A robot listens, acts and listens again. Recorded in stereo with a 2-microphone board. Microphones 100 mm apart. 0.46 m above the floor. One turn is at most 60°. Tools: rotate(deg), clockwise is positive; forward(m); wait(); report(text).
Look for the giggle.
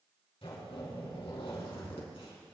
wait()
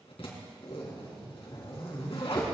wait()
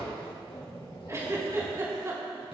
rotate(30)
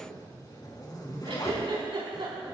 rotate(60)
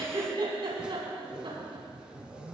rotate(60)
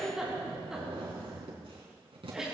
report("Facing the giggle.")